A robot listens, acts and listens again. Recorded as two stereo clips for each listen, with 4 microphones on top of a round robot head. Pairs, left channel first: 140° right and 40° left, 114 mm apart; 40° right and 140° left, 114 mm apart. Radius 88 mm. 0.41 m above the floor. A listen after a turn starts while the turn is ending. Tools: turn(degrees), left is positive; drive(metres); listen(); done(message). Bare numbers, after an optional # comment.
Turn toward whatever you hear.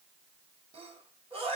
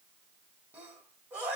# The sneeze: 70° left.
turn(70)
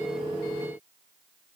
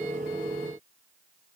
done("Facing where the sneeze came from. I can't hear it now.")